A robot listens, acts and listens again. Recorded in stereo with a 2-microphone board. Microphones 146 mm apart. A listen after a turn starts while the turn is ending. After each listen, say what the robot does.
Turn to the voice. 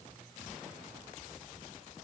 Keep listening.
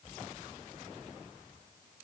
Keep listening.
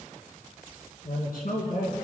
Turn 70° left.
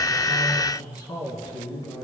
Turn 30° left.
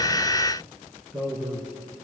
Facing the man speaking, 2 to 4 m away.